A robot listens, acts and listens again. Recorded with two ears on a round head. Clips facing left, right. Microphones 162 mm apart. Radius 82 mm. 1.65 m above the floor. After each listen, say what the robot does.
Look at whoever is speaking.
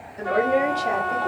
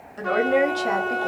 Turn 75° right.
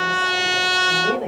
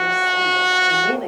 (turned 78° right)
Turn 15° right.
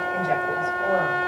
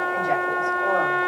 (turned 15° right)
Keep listening.
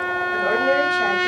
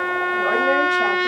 Keep listening.
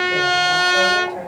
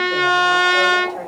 Facing where the woman speaking came from. I can't hear it now.